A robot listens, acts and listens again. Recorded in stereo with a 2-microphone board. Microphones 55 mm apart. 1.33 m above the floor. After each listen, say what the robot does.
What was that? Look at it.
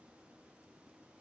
Keep listening.
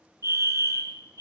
Turn 90° right.
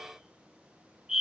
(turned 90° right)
Turn 10° right.
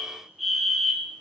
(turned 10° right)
Facing the fire alarm.